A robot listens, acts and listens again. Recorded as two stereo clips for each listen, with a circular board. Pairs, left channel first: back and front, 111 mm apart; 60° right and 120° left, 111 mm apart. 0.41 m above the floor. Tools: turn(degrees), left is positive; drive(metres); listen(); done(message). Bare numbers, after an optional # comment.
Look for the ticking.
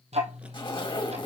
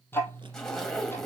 # The ticking: 10° left.
turn(10)
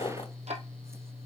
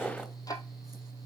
done("Found it: ticking, straight ahead.")